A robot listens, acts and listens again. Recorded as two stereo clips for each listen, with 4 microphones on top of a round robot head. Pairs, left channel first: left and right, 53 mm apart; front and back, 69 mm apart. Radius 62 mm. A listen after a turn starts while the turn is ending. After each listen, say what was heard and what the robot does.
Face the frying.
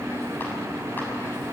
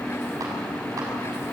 Keep listening.
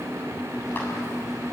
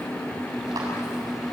Keep listening.
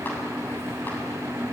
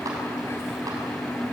I can't make out frying.